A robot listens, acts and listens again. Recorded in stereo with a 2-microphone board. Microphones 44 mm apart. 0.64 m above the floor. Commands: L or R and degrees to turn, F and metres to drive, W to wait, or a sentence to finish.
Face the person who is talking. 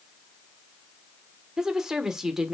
R30
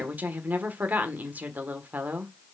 R135
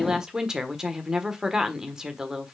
R15
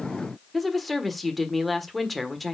Found it: a woman speaking, straight ahead.